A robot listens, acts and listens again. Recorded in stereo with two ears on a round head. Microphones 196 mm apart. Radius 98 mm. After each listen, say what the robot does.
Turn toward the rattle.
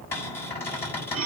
Keep listening.
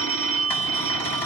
Keep listening.
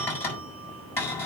I can't make out a rattle, only a cupboard door and a phone ringing.